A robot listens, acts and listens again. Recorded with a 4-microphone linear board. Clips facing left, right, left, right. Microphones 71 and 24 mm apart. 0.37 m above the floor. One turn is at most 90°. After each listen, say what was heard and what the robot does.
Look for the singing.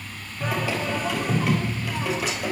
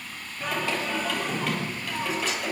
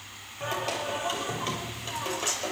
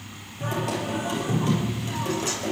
Turn 30° left.
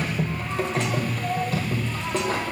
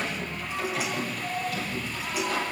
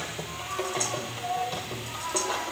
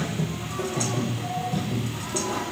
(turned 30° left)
So it is at 145° left. Turn 90° left.
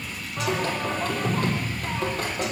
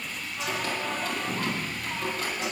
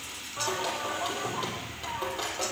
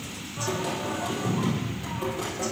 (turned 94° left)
The singing is now 55° left. Turn 55° left.
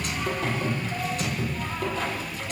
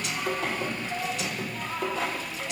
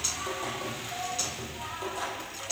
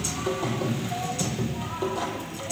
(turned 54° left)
Facing the singing.